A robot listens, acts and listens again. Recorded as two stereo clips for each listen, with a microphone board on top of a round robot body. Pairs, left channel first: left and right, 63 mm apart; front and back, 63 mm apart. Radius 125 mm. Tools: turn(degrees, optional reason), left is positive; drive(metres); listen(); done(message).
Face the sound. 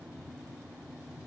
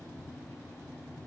listen()
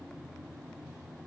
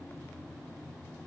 listen()
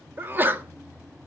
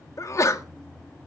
turn(degrees=-35, reason="The sneeze: 35° right.")
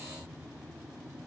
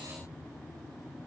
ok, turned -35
done("Facing where the sneeze came from. I can't hear it now.")